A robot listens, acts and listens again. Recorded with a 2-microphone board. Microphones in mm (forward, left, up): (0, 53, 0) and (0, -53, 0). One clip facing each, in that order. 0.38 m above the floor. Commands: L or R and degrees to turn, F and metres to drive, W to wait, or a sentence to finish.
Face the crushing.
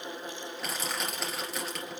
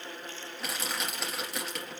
L30
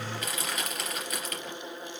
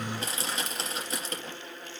R30
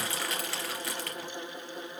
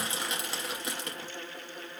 R20
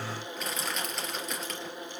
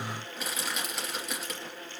Found it: crushing, straight ahead, 2 to 4 m away.